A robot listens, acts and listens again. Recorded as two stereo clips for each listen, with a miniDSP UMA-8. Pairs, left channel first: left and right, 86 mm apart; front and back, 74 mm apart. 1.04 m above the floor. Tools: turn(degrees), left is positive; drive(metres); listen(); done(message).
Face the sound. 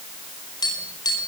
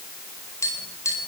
turn(degrees=45)
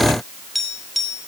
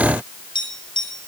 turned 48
done("Found it: tapping, straight ahead.")